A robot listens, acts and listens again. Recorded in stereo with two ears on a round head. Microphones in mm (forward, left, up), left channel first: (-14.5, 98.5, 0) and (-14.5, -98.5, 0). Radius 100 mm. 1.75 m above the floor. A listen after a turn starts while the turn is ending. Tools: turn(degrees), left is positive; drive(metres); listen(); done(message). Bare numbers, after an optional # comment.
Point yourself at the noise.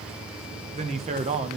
# The man speaking: about 30° right or 150° right.
turn(-30)
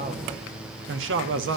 # So it is at 120° right.
turn(-120)
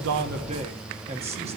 # The man speaking is now 30° right.
turn(-30)
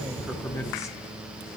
# The man speaking is now 15° left.
turn(15)
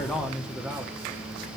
done("Facing the man speaking.")